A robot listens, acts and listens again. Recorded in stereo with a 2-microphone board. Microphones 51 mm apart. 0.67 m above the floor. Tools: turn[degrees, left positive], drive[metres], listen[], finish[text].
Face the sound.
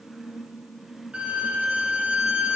Thought: The violin: about 25° right or 155° right.
Action: turn[-25]
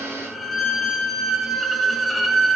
Action: finish[Facing the violin, 2 to 4 m away.]